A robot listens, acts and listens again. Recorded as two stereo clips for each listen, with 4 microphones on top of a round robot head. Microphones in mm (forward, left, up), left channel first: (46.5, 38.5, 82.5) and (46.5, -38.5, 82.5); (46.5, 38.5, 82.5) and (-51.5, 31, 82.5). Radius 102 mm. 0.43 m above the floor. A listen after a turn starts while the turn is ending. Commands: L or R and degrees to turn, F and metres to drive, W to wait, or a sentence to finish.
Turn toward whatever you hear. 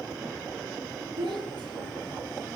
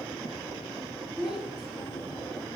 R90
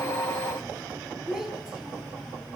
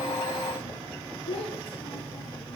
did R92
Found it: a child speaking, straight ahead.